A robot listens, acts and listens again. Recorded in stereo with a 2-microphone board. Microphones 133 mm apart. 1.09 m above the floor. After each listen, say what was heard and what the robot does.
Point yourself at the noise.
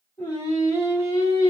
The singing: about 40° left or 140° left. Turn 40° left.
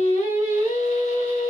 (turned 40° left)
So it is at 105° left. Turn 105° left.
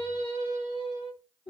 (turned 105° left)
The singing is now 40° left. Turn 40° left.
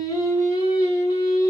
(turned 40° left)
The singing is now 25° left. Turn 25° left.
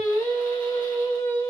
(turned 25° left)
The singing is now 15° left. Turn 15° left.
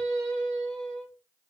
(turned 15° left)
Facing the singing.